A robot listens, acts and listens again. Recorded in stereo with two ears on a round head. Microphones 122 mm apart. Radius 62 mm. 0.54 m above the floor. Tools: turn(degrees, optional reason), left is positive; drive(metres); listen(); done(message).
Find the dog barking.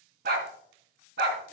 turn(degrees=-90)
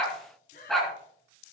done("Found it: a dog barking, straight ahead.")